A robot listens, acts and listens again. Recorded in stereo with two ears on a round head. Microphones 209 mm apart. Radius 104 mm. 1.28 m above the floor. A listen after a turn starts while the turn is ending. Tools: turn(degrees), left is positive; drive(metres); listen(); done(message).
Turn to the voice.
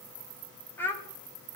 turn(degrees=30)
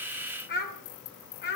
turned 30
turn(degrees=130)
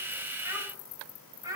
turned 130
turn(degrees=-15)
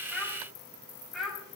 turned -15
done("Facing the child speaking.")